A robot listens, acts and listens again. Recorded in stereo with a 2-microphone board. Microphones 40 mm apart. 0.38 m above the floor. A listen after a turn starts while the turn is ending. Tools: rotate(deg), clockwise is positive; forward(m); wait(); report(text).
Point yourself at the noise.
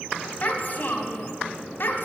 rotate(-60)
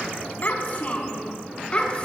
rotate(-25)
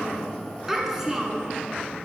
rotate(15)
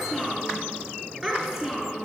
rotate(10)
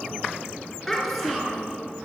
report("Facing the child speaking.")